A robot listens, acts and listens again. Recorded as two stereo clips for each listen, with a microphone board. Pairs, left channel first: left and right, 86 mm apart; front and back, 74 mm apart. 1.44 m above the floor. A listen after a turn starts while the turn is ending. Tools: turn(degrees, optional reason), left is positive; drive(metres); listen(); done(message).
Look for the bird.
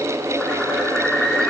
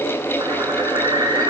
turn(degrees=170, reason="The bird: 170° left.")
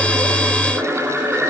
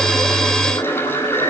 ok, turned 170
turn(degrees=-15, reason="The bird is now 15° right.")
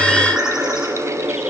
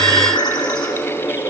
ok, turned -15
done("Facing the bird.")